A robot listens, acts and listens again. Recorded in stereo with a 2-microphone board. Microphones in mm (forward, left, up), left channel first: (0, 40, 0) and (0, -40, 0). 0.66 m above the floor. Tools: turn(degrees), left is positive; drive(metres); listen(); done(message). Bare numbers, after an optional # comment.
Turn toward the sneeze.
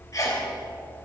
# The sneeze: about 45° left or 135° left.
turn(45)
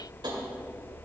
listen()
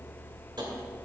done("I heard a sneeze, but can't make it out now. It was about straight ahead or 90° left.")